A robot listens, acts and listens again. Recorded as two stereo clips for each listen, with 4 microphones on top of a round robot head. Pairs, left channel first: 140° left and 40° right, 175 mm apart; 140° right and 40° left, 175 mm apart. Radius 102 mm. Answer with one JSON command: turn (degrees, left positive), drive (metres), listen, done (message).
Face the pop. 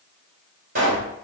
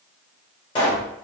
{"turn": -75}
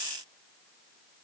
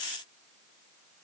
{"done": "Facing where the pop came from. I can't hear it now."}